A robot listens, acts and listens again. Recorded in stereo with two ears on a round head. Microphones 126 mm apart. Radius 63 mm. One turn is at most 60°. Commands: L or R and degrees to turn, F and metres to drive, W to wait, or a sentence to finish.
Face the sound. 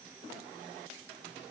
W
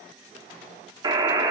R30
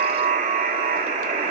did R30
R60
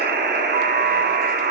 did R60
R60
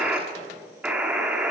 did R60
R10
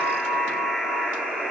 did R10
Found it: a buzzer, straight ahead.